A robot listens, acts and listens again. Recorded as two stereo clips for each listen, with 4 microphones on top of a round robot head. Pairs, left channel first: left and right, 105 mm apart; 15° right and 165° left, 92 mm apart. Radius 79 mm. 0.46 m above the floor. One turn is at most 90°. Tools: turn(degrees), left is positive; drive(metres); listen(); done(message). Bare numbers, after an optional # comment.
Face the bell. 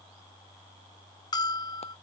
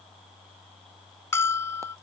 # The bell: 45° left.
turn(45)
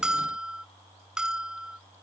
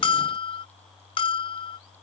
done("Facing the bell.")